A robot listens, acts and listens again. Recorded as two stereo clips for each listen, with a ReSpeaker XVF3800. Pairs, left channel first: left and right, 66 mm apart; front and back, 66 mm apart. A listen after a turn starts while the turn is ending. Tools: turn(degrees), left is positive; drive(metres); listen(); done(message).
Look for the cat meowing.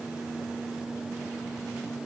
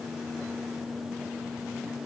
listen()
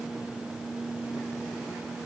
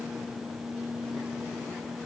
listen()
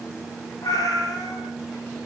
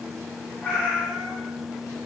turn(degrees=60)
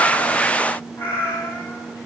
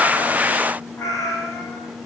turn(degrees=30)
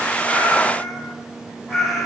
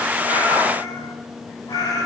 done("Facing the cat meowing, over 4 m away.")